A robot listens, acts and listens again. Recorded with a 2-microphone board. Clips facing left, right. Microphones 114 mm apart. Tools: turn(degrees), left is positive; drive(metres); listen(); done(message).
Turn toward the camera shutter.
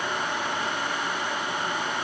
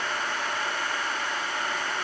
listen()
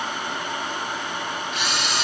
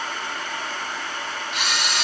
turn(degrees=-70)
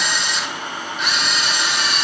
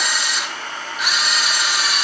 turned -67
done("Facing the camera shutter.")